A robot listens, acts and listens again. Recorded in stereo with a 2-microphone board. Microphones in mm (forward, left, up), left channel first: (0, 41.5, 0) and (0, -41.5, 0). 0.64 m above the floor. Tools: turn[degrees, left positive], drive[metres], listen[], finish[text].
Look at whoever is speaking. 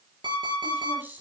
Thought: The woman speaking: about 25° right or 155° right.
Action: turn[-25]
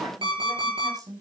Thought: So it is at 130° right.
Action: turn[-130]
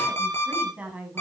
Thought: The woman speaking is now 15° right.
Action: turn[-15]
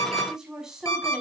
Action: finish[Found it: a woman speaking, straight ahead, over 4 m away.]